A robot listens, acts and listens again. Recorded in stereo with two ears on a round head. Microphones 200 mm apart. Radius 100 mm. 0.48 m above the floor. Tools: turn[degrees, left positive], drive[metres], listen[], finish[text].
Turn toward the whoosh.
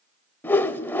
Action: turn[30]
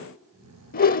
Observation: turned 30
Thought: So it is at 140° left.
Action: turn[140]
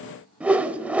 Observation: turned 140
Action: finish[Found it: a whoosh, straight ahead.]